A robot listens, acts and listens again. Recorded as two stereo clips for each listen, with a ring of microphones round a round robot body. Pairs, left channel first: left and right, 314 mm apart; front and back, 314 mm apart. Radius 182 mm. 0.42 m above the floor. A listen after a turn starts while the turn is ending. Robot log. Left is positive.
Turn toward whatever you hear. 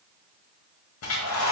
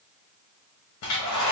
note: The hair dryer: 45° left.
cmd yaw +45
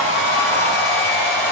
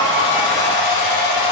end: Found it: a hair dryer, straight ahead, 1 to 2 m away.